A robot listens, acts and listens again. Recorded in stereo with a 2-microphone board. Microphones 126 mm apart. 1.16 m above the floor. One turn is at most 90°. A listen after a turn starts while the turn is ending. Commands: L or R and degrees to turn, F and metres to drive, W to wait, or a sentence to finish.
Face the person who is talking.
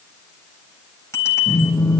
W
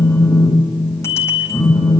W
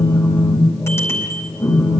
I can't make out anyone speaking, only a phone buzzing and a bicycle bell.